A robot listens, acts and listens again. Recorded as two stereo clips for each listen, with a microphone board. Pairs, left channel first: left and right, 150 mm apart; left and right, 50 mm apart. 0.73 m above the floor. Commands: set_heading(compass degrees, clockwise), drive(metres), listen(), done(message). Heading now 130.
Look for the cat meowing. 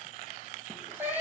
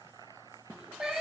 set_heading(160)
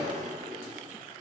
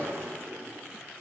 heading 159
listen()
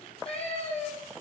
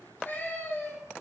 set_heading(109)
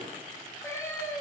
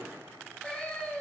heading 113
set_heading(88)
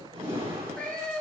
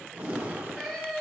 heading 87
set_heading(77)
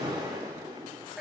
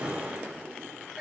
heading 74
done("Facing the cat meowing.")